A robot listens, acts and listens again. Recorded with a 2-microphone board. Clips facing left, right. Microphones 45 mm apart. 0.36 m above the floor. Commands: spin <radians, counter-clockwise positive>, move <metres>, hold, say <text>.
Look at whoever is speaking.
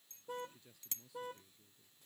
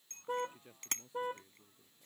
spin -0.52
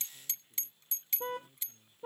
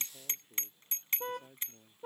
spin -2.01
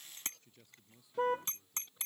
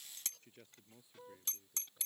spin -0.52
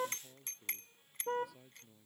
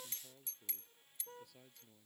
say Found it: a man speaking, straight ahead.